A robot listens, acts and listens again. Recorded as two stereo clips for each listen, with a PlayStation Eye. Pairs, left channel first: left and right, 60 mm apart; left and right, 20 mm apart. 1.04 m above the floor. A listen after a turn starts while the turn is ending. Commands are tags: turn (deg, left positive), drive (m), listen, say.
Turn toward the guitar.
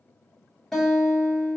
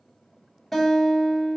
<turn deg="30"/>
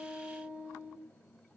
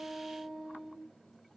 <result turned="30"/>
<turn deg="-25"/>
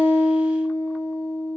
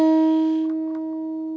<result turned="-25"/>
<say>Found it: a guitar, straight ahead, 1 to 2 m away.</say>